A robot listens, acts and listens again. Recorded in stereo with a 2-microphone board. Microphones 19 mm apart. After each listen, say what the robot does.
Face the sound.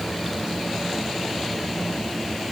Keep listening.
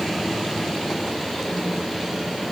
Keep listening.
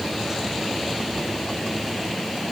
I can't make out anything to turn to.